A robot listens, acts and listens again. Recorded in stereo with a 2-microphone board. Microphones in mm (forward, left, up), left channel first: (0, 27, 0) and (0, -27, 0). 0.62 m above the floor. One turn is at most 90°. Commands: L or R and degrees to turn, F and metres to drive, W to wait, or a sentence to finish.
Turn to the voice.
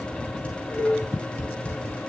W
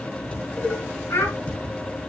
L90
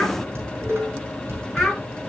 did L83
Facing the child speaking, over 4 m away.